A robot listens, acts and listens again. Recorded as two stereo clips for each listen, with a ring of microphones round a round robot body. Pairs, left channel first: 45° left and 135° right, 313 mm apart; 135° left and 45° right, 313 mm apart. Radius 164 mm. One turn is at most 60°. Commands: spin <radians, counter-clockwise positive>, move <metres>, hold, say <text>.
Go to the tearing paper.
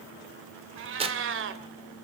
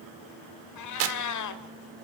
spin -1.05
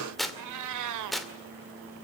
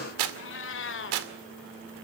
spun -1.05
spin -0.79
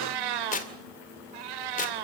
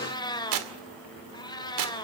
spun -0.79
spin -0.35
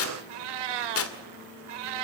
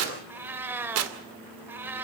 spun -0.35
move 1.0
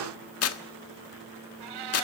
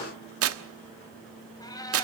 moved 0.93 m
move 1.0
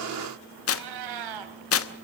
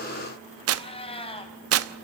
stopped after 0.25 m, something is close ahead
say I am next to the tearing paper.